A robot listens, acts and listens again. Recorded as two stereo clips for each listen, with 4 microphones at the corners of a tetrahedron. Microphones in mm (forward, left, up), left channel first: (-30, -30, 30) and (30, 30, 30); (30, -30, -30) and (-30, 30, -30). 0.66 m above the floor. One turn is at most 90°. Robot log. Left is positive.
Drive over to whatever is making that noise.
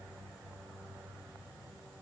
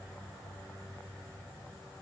cmd idle
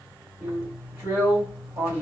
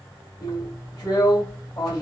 note: The drill: 20° right.
cmd yaw -20
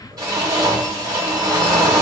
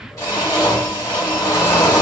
cmd fwd 1.0
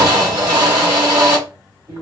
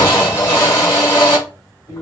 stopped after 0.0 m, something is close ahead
end: Something is in my way. I am facing the drill but have not reached it.